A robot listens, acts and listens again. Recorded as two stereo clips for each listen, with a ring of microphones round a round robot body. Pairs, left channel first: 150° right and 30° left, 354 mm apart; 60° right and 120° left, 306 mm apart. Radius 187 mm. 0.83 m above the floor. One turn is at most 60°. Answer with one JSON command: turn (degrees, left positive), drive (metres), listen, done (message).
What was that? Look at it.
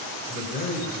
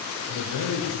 {"turn": -60}
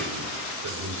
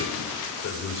{"turn": -25}
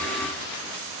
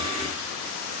{"listen": true}
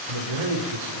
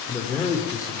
{"turn": 20}
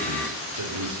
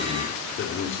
{"turn": -10}
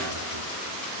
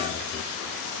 {"listen": true}
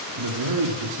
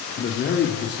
{"done": "Found it: a man speaking, straight ahead."}